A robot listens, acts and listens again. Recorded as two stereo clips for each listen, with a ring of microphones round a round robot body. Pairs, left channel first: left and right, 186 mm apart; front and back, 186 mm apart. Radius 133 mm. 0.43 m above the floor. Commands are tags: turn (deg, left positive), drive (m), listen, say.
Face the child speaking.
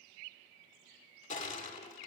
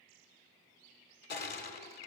<listen/>
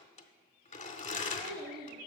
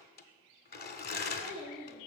<turn deg="-100"/>
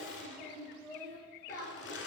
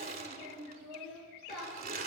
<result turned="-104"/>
<turn deg="15"/>
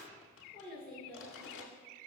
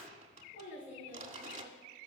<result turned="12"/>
<say>Found it: a child speaking, straight ahead, 2 to 4 m away.</say>